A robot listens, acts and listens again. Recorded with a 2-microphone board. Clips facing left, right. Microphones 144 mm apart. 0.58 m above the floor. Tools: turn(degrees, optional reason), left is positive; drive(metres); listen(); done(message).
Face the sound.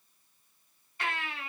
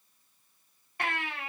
turn(degrees=-60, reason="The baby crying: about 60° right or 120° right.")
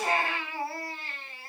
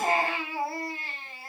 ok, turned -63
turn(degrees=-55, reason="So it is at 55° right.")
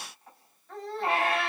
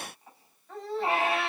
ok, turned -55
done("Facing the baby crying, 2 to 4 m away.")